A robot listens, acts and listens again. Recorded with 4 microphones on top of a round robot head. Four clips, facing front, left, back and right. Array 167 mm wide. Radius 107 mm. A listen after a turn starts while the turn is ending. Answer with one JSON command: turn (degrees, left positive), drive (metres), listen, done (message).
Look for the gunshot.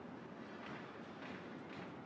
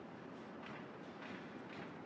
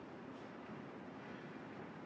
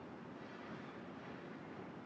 {"listen": true}
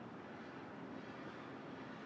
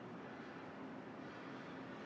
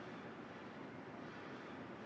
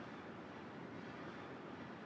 {"listen": true}
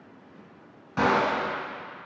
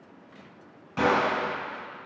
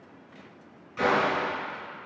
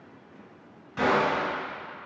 {"turn": 30}
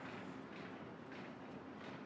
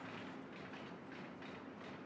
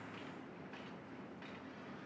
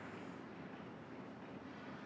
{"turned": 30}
{"done": "Facing where the gunshot came from. I can't hear it now."}